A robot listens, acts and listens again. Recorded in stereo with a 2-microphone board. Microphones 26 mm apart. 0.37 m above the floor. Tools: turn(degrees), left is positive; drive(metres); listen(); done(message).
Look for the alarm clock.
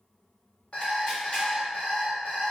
turn(degrees=70)
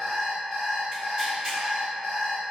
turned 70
turn(degrees=10)
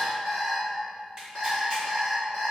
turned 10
done("Found it: an alarm clock, straight ahead, 1 to 2 m away.")